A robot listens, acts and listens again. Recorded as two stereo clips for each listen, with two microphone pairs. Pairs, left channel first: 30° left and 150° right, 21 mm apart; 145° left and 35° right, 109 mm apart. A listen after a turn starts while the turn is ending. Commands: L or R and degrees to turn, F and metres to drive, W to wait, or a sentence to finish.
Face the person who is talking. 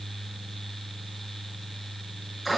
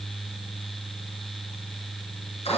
W
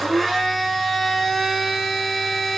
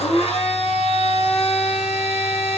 W
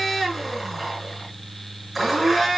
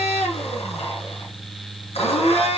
I can't make out anyone speaking, only a blender.